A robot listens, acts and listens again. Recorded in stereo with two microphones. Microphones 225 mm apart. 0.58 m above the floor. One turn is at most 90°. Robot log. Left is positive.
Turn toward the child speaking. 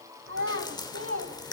note: The child speaking: about 75° right or 105° right.
cmd yaw -75
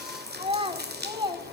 note: So it is at 20° right.
cmd yaw -20
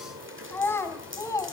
note: The child speaking is now 15° left.
cmd yaw +15
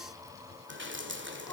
cmd idle
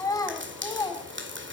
note: The child speaking is now 15° left.
cmd yaw +15
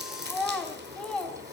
end: Facing the child speaking, 2 to 4 m away.